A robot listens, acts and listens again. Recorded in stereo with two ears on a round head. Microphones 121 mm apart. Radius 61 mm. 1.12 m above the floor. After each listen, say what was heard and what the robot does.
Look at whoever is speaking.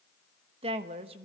The woman speaking: about 45° right or 135° right. Turn 45° right.
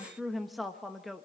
Found it: a woman speaking, straight ahead, 1 to 2 m away.